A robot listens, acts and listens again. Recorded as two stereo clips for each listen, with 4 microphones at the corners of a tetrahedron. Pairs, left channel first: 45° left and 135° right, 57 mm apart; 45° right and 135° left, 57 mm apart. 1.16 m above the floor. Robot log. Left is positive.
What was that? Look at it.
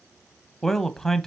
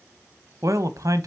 note: The man speaking: 125° left.
cmd yaw +125
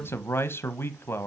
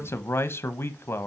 end: Facing the man speaking.